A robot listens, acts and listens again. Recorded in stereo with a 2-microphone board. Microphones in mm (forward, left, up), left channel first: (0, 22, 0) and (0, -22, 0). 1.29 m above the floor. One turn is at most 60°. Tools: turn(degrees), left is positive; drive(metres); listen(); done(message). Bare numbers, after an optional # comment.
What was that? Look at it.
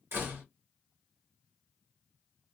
# The door slam: about 55° right or 125° right.
turn(-55)
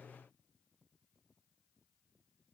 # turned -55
listen()
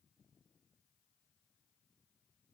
done("I heard a door slam, but can't make it out now. It was about straight ahead or 70° right.")